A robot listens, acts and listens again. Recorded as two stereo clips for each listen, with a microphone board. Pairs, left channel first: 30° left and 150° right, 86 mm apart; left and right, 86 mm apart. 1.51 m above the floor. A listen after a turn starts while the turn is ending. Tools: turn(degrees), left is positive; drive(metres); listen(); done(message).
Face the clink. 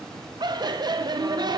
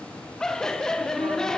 listen()
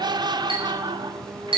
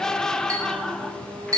turn(degrees=-140)
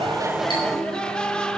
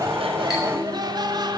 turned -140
listen()
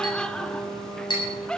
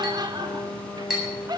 done("Facing the clink, over 4 m away.")